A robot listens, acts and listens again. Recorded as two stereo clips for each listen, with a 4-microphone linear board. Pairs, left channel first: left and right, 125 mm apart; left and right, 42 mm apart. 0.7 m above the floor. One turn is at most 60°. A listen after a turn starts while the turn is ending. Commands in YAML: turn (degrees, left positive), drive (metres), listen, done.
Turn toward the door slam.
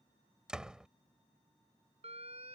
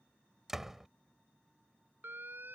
turn: -30
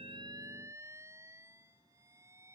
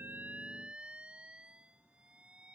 listen: true
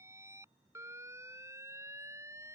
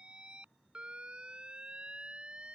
done: "I heard a door slam, but can't make it out now. It was about 25° left or 145° right."